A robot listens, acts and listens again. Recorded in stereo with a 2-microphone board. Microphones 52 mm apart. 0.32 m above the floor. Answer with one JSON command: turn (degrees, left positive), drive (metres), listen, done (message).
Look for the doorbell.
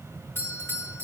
{"turn": 50}
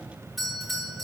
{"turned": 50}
{"done": "Facing the doorbell."}